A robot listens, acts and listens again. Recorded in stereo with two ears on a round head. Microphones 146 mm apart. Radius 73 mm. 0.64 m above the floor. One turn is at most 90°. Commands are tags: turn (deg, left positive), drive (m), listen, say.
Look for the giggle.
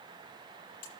<listen/>
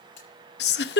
<turn deg="70"/>
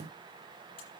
<listen/>
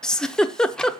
<say>Facing the giggle.</say>